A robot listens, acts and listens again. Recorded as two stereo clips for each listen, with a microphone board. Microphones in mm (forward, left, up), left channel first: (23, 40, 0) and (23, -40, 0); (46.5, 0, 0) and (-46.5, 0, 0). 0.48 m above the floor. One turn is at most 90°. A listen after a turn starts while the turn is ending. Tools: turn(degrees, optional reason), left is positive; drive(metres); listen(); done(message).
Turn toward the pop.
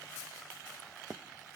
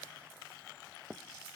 listen()
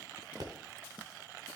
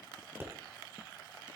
turn(degrees=-90, reason="The pop: 120° right.")
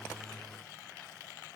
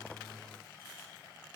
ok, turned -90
turn(degrees=-30, reason="Nothing new. It was at 30° right.")
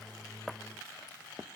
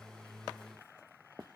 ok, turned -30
done("I heard a pop from this way, but can't make it out now.")